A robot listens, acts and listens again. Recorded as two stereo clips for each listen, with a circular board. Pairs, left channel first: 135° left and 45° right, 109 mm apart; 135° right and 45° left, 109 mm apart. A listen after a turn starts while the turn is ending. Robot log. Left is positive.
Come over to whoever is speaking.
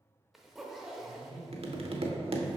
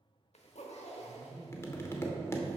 note: The man speaking: 115° left.
cmd yaw +115
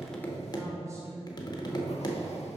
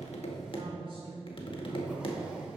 note: The man speaking is now 15° left.
cmd yaw +15
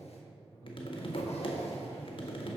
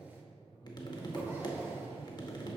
cmd fwd 1.0
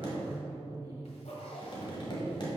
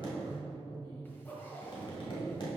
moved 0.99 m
cmd fwd 1.0
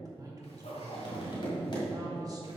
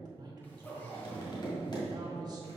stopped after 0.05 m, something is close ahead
end: I am next to the man speaking.